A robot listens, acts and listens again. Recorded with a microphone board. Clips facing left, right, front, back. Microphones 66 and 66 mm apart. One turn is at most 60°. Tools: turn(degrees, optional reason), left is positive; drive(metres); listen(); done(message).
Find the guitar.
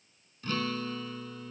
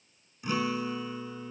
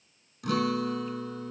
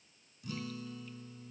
turn(degrees=-15, reason="The guitar: 15° right.")
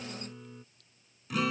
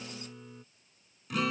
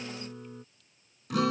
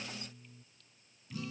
done("Facing the guitar.")